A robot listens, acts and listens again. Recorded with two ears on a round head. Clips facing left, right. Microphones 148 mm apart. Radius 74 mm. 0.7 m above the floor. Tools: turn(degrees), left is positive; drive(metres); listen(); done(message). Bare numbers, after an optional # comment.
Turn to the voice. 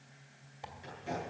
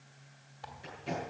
listen()
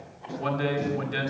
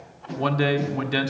# The man speaking: about 65° right or 115° right.
turn(-65)
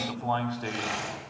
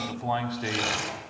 # So it is at 15° right.
turn(-15)
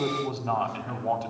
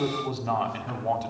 done("Found it: a man speaking, straight ahead, 1 to 2 m away.")